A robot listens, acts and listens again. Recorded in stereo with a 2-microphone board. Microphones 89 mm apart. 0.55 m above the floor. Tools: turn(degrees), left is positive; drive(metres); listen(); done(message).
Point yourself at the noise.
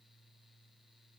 listen()
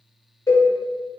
turn(degrees=40)
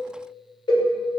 turn(degrees=90)
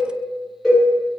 done("Facing the cowbell.")